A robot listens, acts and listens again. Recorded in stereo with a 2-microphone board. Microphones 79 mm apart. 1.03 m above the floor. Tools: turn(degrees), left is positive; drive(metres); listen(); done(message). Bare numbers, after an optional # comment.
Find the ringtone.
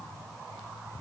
listen()
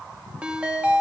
turn(-30)
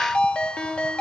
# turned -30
# So it is at 15° left.
turn(15)
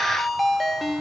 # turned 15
done("Found it: a ringtone, straight ahead.")